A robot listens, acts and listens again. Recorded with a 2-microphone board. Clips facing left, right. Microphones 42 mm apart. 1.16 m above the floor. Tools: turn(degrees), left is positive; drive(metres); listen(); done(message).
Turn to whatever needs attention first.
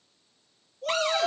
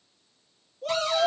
turn(degrees=-30)
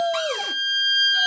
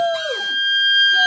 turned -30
turn(degrees=-145)
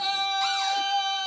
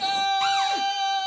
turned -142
done("Facing the shout.")